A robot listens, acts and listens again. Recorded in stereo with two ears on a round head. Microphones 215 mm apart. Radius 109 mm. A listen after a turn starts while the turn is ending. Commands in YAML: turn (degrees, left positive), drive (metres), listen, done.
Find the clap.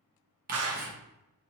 turn: -65
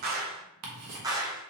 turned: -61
turn: -15
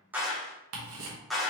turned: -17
done: "Found it: a clap, straight ahead, under 1 m away."